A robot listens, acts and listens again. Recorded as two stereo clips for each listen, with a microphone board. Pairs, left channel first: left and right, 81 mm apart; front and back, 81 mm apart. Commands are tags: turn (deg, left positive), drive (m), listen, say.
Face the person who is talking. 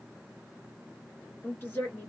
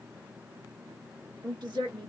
<turn deg="155"/>
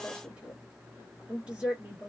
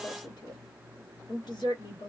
<turn deg="-15"/>
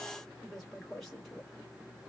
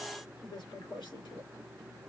<say>Found it: a woman speaking, straight ahead.</say>